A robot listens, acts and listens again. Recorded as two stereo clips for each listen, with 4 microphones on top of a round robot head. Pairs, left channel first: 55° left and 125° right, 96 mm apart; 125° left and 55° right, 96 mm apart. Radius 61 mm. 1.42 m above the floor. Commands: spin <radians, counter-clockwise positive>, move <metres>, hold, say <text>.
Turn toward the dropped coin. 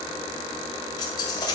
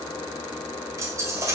say Found it: a dropped coin, straight ahead.